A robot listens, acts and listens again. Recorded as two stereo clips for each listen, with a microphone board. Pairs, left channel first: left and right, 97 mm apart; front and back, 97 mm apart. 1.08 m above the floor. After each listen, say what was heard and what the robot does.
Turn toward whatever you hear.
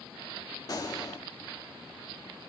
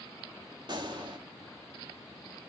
The gunshot: 140° left. Turn 140° left.
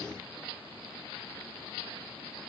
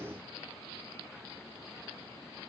I heard a gunshot from this way, but can't make it out now.